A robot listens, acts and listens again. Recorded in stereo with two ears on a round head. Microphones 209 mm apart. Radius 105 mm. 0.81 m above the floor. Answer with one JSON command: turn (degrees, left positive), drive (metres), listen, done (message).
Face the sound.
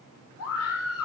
{"turn": 70}
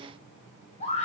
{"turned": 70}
{"turn": 30}
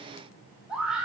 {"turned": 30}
{"done": "Facing the scream, 2 to 4 m away."}